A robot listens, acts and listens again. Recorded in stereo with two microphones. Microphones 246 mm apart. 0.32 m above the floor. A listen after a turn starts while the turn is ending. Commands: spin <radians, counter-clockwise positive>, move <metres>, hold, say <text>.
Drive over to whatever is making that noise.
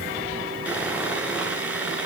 spin -0.52
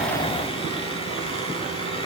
hold
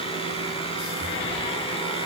spin 0.44
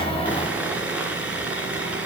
move 1.0
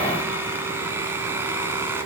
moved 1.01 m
spin -0.17
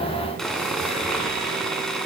move 1.0
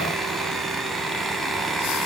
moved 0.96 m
move 1.0
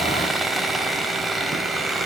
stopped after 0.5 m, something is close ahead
say Arrived at the sawing, straight ahead.